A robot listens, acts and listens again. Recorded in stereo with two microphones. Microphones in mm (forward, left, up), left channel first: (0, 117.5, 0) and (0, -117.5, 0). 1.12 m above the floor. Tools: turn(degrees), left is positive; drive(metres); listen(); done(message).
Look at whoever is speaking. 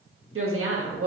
turn(degrees=-70)
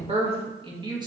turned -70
turn(degrees=-20)
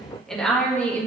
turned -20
turn(degrees=10)
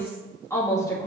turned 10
turn(degrees=15)
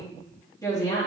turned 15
turn(degrees=15)
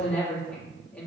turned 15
done("Facing the woman speaking, 2 to 4 m away.")